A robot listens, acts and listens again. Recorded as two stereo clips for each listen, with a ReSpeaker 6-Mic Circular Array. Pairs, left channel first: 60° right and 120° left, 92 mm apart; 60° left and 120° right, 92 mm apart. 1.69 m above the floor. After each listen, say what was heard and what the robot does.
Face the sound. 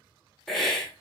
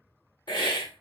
The hiss: 25° left. Turn 25° left.
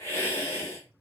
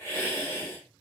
Found it: a hiss, straight ahead, 1 to 2 m away.